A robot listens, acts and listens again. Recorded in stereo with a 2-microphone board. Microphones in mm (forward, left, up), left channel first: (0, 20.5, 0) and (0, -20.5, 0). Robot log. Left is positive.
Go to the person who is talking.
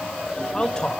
note: The man speaking: about 20° left or 160° left.
cmd yaw +20
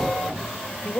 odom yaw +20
note: So it is at 140° left.
cmd yaw +140
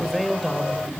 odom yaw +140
cmd fwd 1.0
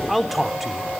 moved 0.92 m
cmd fwd 1.0
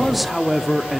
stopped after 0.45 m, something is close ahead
end: Arrived at the man speaking, straight ahead.